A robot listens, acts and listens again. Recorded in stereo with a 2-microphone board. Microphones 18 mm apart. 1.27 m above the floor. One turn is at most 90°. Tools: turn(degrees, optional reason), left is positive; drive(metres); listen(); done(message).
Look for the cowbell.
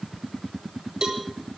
turn(degrees=-55, reason="The cowbell: about 55° right or 125° right.")
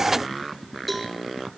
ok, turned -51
done("Facing the cowbell, 2 to 4 m away.")